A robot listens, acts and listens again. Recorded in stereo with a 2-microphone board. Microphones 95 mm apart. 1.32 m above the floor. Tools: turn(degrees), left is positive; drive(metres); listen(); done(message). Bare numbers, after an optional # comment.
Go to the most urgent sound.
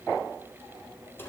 listen()
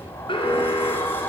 # The alarm: about 60° left or 120° left.
turn(60)
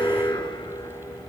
# So it is at 60° left.
turn(60)
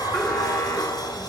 listen()
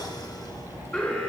# The alarm is now 15° left.
turn(15)
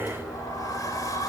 listen()
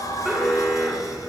drive(1.0)
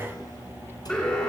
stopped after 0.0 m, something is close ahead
# The alarm is now 15° left.
turn(15)
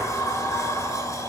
listen()
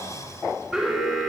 done("Blocked. The alarm is further on, straight ahead.")